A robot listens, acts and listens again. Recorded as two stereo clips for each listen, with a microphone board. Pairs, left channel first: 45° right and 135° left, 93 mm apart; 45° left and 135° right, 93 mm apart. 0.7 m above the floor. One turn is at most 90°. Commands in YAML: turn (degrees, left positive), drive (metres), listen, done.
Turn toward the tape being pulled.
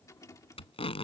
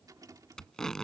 turn: -40
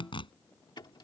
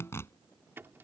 turn: -20
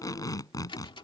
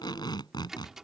done: "Found it: tape being pulled, straight ahead."